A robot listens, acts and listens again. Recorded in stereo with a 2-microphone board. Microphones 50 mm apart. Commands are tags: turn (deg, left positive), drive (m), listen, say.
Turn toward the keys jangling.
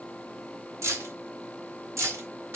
<turn deg="-90"/>
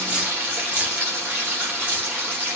<turn deg="-25"/>
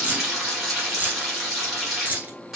<turn deg="-35"/>
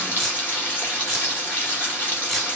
<say>Facing the keys jangling, 1 to 2 m away.</say>